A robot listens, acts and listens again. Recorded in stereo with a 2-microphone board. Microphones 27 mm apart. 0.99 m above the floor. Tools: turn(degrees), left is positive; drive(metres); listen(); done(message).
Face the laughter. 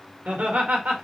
turn(degrees=-70)
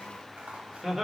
turn(degrees=-30)
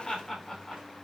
turn(degrees=10)
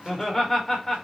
done("Facing the laughter, 1 to 2 m away.")